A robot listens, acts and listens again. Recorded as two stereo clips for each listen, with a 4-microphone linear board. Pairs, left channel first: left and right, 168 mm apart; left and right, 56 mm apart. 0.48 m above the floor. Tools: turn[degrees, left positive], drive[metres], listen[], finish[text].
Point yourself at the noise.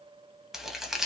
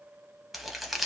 Action: turn[-30]
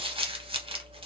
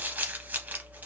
Thought: So it is at 145° right.
Action: turn[-145]
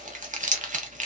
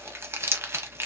Thought: The crumpling is now 50° right.
Action: turn[-50]
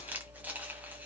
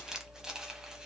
Thought: The crumpling is now 10° right.
Action: turn[-10]
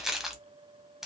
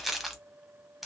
Action: finish[Found it: crumpling, straight ahead, under 1 m away.]